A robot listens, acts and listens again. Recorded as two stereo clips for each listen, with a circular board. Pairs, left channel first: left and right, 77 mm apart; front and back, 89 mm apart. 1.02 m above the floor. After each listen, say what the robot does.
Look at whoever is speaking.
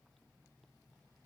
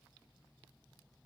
Keep listening.
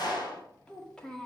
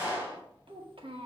Turn 175° left.
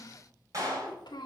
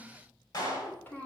Turn 75° left.
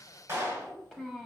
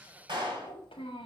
Turn 10° right.
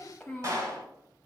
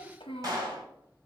Facing the child speaking, 1 to 2 m away.